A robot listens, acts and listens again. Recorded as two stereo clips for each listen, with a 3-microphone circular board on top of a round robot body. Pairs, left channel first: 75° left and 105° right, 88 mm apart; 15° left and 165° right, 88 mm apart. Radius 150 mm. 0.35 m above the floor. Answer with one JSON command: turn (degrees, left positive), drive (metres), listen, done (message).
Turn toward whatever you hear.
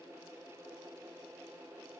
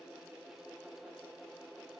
{"listen": true}
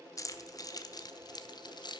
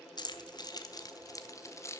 {"turn": 70}
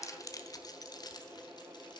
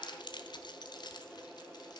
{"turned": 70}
{"turn": 50}
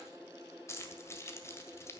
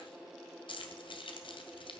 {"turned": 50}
{"turn": 20}
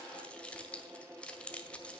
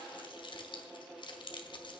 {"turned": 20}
{"done": "Facing the keys jangling."}